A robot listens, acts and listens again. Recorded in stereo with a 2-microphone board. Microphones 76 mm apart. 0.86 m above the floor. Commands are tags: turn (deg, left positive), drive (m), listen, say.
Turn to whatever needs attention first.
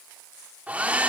<listen/>
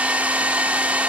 <listen/>
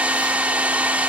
<say>I can't make out anything urgent to turn to.</say>